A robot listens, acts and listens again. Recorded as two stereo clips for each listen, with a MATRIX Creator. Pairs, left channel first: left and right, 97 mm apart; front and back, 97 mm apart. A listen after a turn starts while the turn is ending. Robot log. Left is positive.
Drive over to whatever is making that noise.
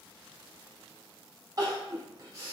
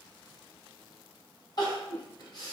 note: The crying: 40° right.
cmd yaw -40
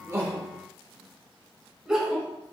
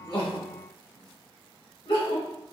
note: The crying is now 10° right.
cmd yaw -10
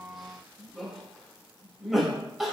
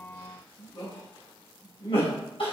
cmd fwd 1.0
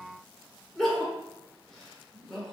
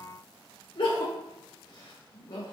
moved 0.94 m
cmd fwd 1.0
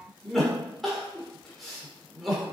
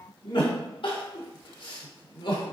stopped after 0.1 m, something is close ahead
end: I am next to the crying.